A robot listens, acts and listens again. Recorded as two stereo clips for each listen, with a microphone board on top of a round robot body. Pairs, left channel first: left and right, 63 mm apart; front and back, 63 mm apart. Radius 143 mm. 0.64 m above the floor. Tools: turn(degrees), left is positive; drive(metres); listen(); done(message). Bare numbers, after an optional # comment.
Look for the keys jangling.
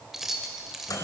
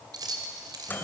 # The keys jangling: 175° right.
turn(-175)
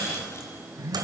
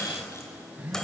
listen()
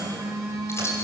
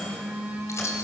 # The keys jangling is now 45° left.
turn(45)
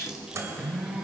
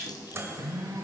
# The keys jangling is now 10° right.
turn(-10)
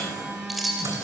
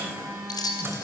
done("Facing the keys jangling.")